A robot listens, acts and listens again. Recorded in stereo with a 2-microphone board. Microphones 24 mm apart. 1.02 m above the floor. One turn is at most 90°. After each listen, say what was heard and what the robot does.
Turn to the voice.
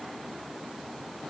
Keep listening.
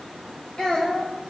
The child speaking: about 35° left or 145° left. Turn 35° left.
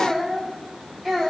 So it is at 10° left. Turn 10° left.
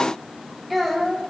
Found it: a child speaking, straight ahead, over 4 m away.